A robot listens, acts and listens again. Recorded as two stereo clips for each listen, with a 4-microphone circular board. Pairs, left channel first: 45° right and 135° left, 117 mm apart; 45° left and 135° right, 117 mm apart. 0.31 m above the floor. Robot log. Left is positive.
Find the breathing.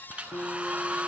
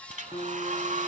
cmd idle
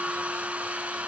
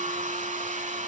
cmd idle
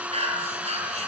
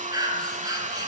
note: The breathing: 165° left.
cmd yaw +165
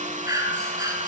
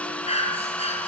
note: The breathing is now 75° left.
cmd yaw +75
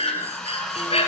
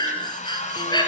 note: The breathing is now 10° right.
cmd yaw -10
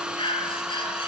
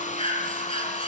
end: Found it: breathing, straight ahead.